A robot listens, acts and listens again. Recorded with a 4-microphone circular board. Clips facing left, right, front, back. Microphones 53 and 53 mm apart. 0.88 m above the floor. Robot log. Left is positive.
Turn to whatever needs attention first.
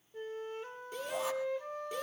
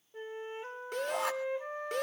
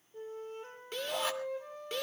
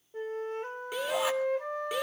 note: The shout: 100° right.
cmd yaw -100
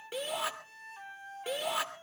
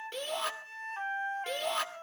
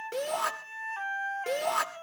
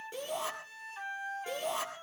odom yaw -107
end: Facing the shout.